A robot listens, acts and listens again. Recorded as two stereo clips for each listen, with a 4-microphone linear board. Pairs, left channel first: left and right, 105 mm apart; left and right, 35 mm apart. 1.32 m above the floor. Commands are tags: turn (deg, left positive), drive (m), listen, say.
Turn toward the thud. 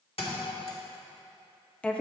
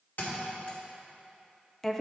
<turn deg="65"/>
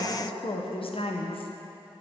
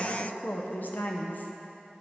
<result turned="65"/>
<listen/>
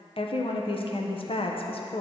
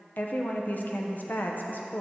<say>I heard a thud, but can't make it out now. It was about straight ahead or 50° left.</say>